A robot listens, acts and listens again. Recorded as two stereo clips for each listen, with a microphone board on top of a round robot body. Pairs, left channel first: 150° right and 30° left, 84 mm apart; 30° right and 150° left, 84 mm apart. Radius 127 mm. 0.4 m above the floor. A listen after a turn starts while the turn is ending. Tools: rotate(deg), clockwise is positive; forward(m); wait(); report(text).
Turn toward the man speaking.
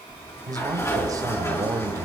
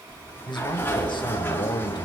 rotate(15)
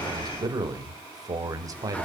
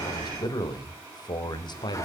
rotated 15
rotate(10)
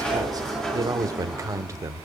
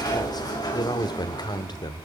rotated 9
rotate(20)
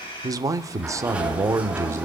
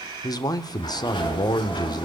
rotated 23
rotate(15)
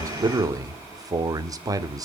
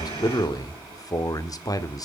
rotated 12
report("Facing the man speaking, 1 to 2 m away.")